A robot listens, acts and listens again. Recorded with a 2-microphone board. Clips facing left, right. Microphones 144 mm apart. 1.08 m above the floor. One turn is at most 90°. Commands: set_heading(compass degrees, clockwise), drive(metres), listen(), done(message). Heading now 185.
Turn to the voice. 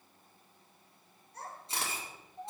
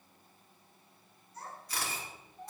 set_heading(120)
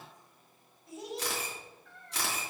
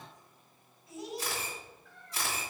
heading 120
set_heading(70)
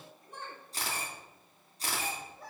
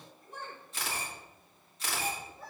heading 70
done("Facing the child speaking, over 4 m away.")